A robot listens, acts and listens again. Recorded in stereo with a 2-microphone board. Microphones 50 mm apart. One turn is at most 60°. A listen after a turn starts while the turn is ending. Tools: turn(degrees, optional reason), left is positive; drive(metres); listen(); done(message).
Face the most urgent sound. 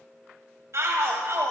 turn(degrees=-60, reason="The shout: about 70° right or 110° right.")
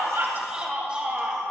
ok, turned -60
turn(degrees=-25, reason="So it is at 25° right.")
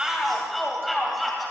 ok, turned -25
done("Found it: a shout, straight ahead, 2 to 4 m away.")